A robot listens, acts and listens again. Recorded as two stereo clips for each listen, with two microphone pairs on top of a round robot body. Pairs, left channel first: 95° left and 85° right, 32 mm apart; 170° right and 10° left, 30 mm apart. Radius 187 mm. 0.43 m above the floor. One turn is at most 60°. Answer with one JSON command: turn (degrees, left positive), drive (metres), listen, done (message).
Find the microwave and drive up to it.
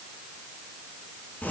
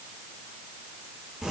{"listen": true}
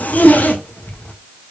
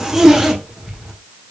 {"listen": true}
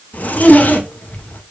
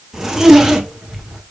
{"done": "I can't make out a microwave to turn to."}